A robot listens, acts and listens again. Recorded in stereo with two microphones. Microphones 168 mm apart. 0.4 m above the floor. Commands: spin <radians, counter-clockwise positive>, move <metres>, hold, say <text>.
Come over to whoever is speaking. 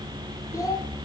spin 0.35
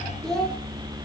move 1.0
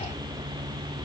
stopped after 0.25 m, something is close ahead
hold
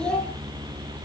say Blocked. The child speaking is further on, straight ahead.